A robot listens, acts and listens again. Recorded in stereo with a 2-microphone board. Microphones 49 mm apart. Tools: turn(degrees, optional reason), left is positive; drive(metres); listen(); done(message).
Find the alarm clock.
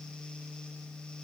listen()
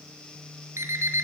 turn(degrees=-65, reason="The alarm clock: about 65° right or 115° right.")
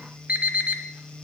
turn(degrees=-30, reason="So it is at 30° right.")
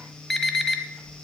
done("Facing the alarm clock.")